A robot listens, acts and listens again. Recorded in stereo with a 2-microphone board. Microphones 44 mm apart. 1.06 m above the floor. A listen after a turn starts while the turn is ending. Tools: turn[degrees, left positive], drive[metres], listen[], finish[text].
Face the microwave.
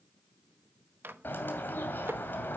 Thought: The microwave: about 60° right or 120° right.
Action: turn[-60]
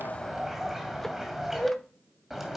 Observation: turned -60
Action: listen[]
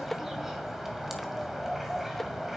Action: finish[Facing the microwave, under 1 m away.]